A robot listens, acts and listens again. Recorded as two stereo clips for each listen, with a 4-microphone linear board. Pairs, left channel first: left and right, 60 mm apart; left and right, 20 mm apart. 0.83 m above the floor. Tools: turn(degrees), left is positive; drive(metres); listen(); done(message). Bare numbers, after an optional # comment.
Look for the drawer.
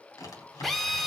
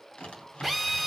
turn(90)
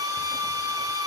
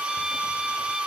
listen()
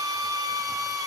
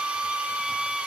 listen()
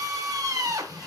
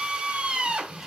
done("I heard a drawer from this way, but can't make it out now.")